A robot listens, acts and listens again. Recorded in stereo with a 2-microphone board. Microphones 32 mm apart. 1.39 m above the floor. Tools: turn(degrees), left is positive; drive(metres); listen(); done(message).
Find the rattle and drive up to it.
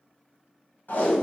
listen()
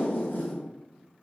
listen()
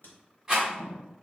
turn(degrees=-20)
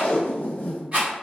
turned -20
turn(degrees=-135)
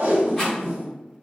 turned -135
listen()
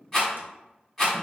drive(metres=1.0)
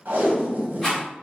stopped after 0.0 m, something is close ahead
done("Blocked. The rattle is further on, straight ahead.")